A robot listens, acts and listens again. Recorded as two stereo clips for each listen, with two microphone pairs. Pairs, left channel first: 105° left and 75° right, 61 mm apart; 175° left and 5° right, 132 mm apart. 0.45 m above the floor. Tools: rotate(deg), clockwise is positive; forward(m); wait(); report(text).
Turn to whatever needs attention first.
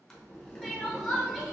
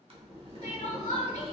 rotate(175)
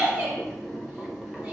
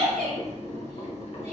report("Found it: crying, straight ahead.")